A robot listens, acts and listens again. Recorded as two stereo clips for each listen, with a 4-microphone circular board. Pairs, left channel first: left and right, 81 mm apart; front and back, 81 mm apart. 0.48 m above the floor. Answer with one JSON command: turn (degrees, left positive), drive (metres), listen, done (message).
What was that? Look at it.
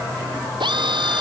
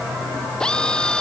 {"turn": -80}
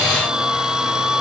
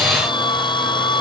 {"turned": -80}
{"turn": -10}
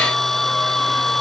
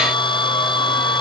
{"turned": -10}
{"done": "Found it: a drill, straight ahead."}